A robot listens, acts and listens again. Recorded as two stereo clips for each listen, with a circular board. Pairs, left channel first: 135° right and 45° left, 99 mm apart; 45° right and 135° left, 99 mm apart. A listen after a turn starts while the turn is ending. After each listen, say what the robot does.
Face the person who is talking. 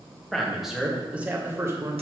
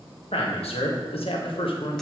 Turn 10° right.
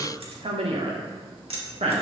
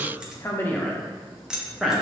Turn 50° left.
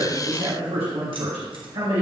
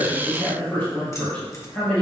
Turn 30° left.
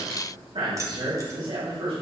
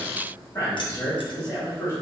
Turn 10° left.
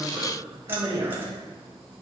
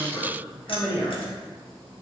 Found it: a man speaking, straight ahead, 2 to 4 m away.